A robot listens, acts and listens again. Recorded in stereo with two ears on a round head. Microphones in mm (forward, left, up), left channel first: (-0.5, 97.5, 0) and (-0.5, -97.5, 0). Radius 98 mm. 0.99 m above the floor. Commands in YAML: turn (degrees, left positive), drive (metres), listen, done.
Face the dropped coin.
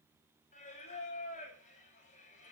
listen: true
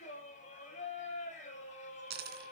turn: -50
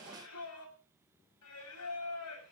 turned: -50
listen: true
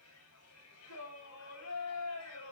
done: "I heard a dropped coin, but can't make it out now. It was about straight ahead or 80° right."